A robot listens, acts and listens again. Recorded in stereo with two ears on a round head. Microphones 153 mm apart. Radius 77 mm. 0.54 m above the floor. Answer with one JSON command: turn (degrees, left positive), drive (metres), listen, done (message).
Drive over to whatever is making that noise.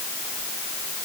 {"listen": true}
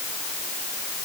{"listen": true}
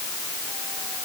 {"done": "I can't make out anything."}